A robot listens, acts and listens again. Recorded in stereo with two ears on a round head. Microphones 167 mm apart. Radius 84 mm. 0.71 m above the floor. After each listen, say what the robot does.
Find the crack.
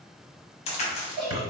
Turn 35° left.
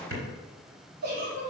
Keep listening.
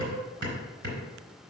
I heard a crack, but can't make it out now. It was about straight ahead or 110° left.